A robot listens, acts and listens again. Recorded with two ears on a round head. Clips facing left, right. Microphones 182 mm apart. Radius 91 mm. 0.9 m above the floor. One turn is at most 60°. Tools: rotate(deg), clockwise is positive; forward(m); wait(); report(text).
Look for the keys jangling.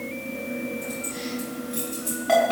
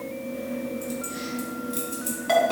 rotate(25)
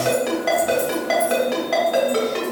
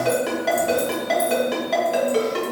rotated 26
wait()
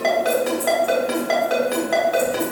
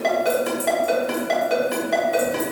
wait()
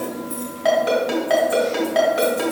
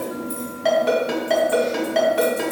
rotate(40)
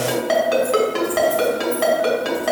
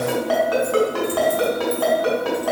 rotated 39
wait()
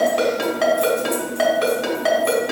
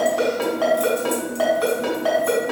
wait()
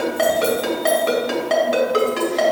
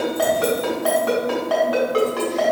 report("I heard keys jangling, but can't make it out now. It was about straight ahead or 100° right.")